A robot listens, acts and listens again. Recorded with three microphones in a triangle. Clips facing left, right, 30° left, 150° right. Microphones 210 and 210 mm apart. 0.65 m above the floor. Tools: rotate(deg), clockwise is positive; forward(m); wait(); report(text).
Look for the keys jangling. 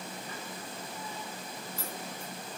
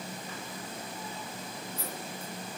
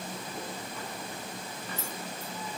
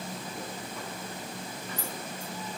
rotate(-95)
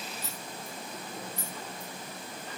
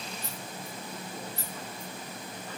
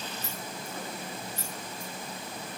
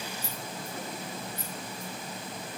rotate(-15)
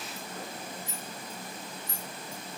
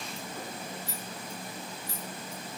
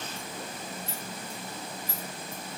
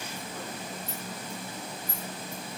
rotate(-25)
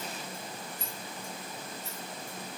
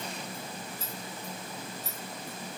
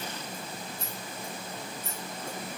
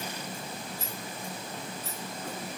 report("Facing the keys jangling, 2 to 4 m away.")